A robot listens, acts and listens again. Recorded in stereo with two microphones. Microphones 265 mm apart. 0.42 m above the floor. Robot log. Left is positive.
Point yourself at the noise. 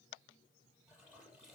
cmd yaw -30
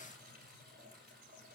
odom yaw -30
note: So it is at 145° right.
cmd yaw -145
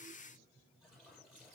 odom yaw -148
end: Found it: a toilet flushing, straight ahead, over 4 m away.